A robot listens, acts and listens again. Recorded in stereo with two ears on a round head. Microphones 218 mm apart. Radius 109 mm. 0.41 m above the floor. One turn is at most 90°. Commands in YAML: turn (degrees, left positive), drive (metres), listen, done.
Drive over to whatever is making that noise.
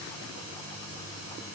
listen: true
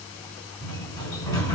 turn: 30
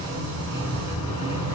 turn: -15
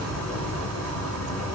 drive: 1.0
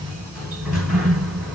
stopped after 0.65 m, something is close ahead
done: "I am next to the sliding door."